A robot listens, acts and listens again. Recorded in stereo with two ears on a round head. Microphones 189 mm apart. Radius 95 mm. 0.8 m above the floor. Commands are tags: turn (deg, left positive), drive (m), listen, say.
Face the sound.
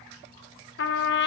<turn deg="55"/>
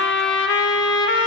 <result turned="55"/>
<turn deg="65"/>
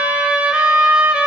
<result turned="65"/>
<say>Facing the trumpet.</say>